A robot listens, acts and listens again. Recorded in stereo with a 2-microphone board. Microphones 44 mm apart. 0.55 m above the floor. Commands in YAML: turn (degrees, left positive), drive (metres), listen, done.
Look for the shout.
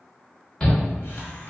turn: 30
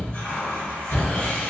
turn: 135
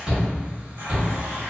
turn: -30
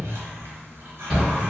turn: 15
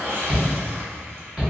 done: "Facing the shout, 1 to 2 m away."